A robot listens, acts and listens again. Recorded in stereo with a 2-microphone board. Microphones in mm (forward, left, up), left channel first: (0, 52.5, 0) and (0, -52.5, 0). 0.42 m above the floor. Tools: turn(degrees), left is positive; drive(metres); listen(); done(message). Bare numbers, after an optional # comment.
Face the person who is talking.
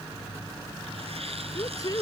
# The woman speaking: about 35° left or 145° left.
turn(35)
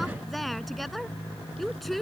done("Facing the woman speaking.")